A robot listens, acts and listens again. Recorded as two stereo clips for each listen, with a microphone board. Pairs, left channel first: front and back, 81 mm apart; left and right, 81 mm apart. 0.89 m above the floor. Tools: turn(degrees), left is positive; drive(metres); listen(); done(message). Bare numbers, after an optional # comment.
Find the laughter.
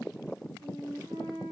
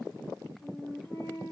listen()
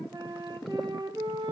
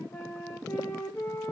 listen()
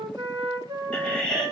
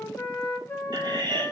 # The laughter: 80° right.
turn(-80)
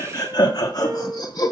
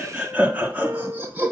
# The laughter is now 25° right.
turn(-25)
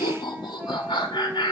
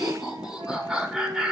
done("Found it: laughter, straight ahead.")